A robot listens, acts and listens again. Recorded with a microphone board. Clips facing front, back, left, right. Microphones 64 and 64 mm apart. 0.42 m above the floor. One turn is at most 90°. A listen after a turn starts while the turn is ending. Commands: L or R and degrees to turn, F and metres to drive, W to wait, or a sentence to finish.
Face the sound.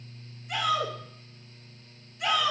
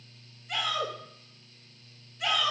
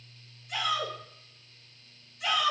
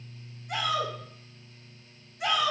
R85
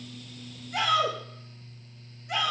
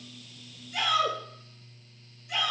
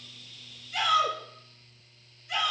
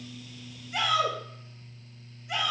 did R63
R25
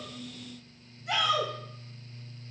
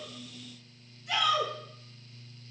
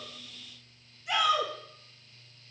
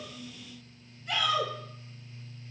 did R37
L15
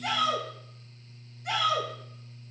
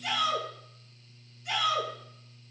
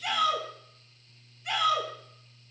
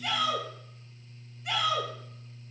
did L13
Found it: a shout, straight ahead, 2 to 4 m away.